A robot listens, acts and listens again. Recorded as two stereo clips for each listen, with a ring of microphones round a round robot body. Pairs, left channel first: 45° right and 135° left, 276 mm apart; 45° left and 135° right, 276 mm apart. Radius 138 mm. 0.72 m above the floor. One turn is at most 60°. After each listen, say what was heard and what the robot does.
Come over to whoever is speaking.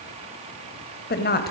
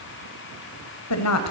The woman speaking: 10° left. Turn 10° left.
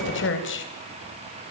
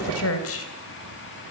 Drive 1.0 m forward.
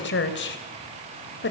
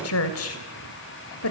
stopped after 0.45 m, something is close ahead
Blocked. The woman speaking is further on, straight ahead.